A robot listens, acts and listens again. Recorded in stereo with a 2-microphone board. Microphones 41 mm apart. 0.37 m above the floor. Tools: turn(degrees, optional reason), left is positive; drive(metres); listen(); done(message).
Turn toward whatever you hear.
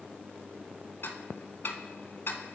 turn(degrees=65, reason="The ticking: about 65° left or 115° left.")
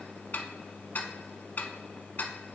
turn(degrees=50, reason="So it is at 50° left.")
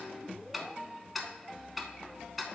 done("Found it: ticking, straight ahead.")